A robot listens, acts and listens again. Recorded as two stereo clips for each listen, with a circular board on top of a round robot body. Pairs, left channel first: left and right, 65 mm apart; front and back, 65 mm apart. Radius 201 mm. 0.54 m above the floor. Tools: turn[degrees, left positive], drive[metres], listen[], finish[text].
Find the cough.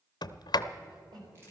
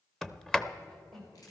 Thought: The cough: 85° right.
Action: turn[-85]
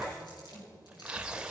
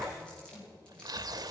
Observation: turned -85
Thought: The cough is now 25° left.
Action: turn[25]
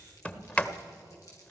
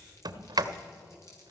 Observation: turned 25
Action: listen[]
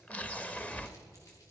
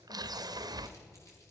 Action: listen[]
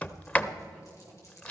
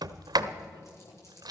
Action: finish[I heard a cough from this way, but can't make it out now.]